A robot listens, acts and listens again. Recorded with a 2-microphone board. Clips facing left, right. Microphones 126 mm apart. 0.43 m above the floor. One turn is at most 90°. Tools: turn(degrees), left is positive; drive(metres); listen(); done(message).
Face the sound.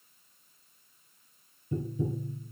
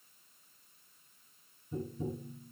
turn(degrees=90)
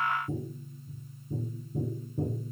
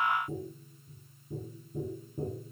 done("Facing the tapping.")